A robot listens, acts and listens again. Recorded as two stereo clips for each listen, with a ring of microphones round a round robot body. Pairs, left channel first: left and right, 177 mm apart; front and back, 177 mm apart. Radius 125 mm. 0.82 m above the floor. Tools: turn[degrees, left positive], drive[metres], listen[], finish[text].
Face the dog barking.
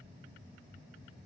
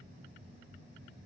Action: listen[]
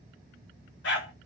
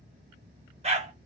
Thought: The dog barking: 130° left.
Action: turn[130]
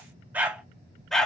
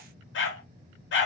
Action: finish[Found it: a dog barking, straight ahead, 1 to 2 m away.]